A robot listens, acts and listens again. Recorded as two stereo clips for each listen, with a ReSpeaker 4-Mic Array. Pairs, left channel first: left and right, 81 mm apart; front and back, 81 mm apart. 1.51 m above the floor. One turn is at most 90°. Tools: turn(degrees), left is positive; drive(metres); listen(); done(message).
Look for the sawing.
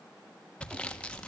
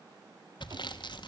turn(degrees=15)
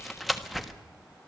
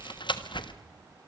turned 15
done("Found it: sawing, straight ahead, 1 to 2 m away.")